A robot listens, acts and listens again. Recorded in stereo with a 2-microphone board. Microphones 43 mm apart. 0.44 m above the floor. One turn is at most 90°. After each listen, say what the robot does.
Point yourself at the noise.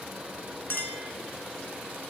Turn 55° left.
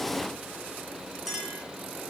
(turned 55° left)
Found it: a clink, straight ahead, 2 to 4 m away.